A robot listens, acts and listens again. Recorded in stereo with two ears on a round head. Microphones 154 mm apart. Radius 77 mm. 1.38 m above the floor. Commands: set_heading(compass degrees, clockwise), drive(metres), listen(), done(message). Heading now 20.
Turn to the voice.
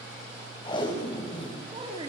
set_heading(50)
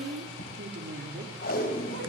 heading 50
set_heading(160)
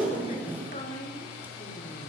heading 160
set_heading(120)
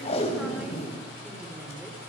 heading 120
listen()
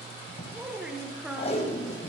done("Facing the woman speaking, over 4 m away.")